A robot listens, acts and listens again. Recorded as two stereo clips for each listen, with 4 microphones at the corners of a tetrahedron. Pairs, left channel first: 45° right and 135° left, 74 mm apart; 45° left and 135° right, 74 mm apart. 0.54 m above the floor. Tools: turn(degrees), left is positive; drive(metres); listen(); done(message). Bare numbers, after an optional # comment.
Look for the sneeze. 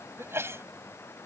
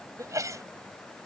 # The sneeze: 175° right.
turn(-175)
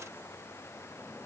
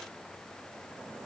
done("I heard a sneeze from this way, but can't make it out now.")